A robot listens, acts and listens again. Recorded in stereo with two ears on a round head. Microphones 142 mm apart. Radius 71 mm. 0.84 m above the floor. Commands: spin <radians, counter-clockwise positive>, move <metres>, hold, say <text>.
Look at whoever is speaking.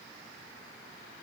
hold
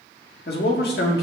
spin 1.22
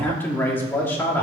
spin 0.26
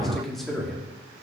say Found it: a man speaking, straight ahead, 2 to 4 m away.